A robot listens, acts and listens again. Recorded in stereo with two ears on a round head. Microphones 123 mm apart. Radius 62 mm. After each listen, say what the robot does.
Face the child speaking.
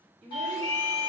Turn 50° right.
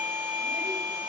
Keep listening.
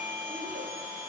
Keep listening.
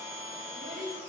Turn 75° right.
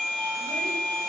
Keep listening.
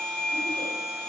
Keep listening.
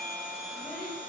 I heard a child speaking from this way, but can't make it out now.